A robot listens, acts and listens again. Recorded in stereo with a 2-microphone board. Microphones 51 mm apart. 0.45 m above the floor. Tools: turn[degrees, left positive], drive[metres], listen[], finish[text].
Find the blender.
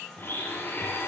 Thought: The blender: about 40° left or 140° left.
Action: turn[40]
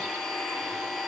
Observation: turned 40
Action: finish[Facing the blender.]